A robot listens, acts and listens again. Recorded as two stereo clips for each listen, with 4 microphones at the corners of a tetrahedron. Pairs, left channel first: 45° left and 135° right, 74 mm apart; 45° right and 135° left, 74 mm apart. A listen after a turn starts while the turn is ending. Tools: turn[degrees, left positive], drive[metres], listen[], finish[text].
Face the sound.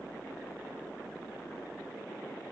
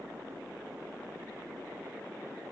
Action: listen[]
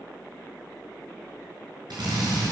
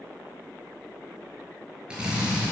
Thought: The drill: 150° right.
Action: turn[-150]
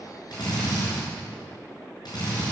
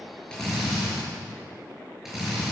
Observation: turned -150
Thought: The drill is now 50° left.
Action: turn[50]
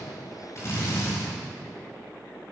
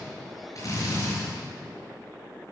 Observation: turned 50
Action: finish[Found it: a drill, straight ahead.]